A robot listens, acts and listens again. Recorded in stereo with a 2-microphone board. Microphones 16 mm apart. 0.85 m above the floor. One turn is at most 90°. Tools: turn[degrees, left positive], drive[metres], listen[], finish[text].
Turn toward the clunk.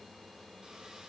Action: listen[]
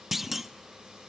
Action: turn[-30]
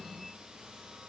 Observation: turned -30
Action: listen[]
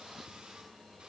Action: finish[I heard a clunk, but can't make it out now. It was about 25° left or 145° right.]